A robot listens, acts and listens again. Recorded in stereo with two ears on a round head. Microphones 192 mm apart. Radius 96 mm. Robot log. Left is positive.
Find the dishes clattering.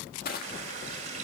cmd idle
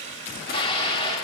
note: The dishes clattering: about 25° left or 155° left.
cmd yaw +25
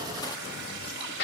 note: So it is at 130° left.
cmd yaw +130
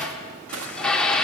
end: Found it: dishes clattering, straight ahead.